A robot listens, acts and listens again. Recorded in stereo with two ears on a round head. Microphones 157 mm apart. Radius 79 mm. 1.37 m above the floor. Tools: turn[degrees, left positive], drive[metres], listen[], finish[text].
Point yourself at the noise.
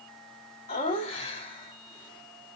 Thought: The laughter: about 30° left or 150° left.
Action: turn[30]
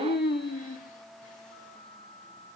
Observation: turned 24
Thought: So it is at 130° left.
Action: turn[130]
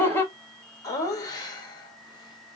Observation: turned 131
Thought: The laughter is now 25° left.
Action: turn[25]
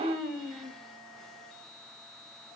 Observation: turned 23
Action: finish[Found it: laughter, straight ahead, 1 to 2 m away.]